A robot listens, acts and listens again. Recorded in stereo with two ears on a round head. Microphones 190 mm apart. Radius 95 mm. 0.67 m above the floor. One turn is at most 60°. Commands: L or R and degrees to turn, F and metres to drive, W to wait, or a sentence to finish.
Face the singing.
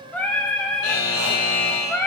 L30
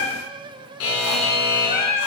L60
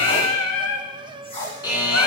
L60
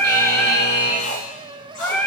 L10
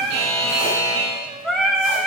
Found it: singing, straight ahead, under 1 m away.